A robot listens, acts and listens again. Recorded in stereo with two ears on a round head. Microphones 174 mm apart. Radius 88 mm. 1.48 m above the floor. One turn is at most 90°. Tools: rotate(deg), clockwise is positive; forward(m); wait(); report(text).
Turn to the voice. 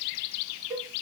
wait()
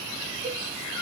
wait()
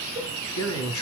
rotate(-90)
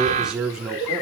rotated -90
report("Facing the man speaking, over 4 m away.")